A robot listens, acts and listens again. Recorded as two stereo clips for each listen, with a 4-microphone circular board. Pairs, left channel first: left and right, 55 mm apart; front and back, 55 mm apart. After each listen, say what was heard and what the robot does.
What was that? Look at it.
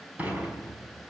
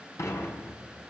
The dishes clattering: 25° right. Turn 25° right.
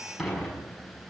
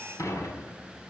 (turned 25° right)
Found it: dishes clattering, straight ahead, over 4 m away.